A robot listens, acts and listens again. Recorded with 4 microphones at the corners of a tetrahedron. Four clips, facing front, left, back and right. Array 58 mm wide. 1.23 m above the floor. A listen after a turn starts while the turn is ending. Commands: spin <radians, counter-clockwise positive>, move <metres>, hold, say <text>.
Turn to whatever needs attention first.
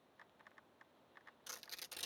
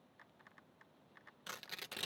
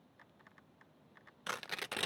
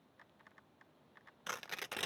hold
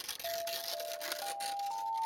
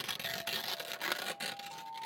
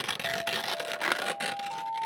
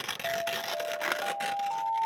spin -1.57
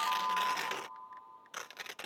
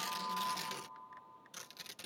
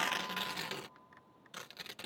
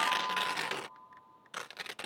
hold
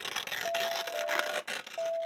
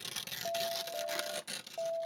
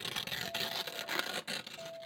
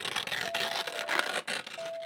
say Found it: an alarm, straight ahead.